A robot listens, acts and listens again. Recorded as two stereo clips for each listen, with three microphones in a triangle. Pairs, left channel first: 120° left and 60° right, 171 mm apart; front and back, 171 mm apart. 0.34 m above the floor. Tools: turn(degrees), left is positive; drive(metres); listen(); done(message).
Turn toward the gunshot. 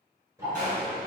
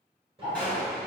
turn(degrees=-85)
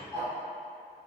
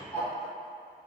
done("Facing where the gunshot came from. I can't hear it now.")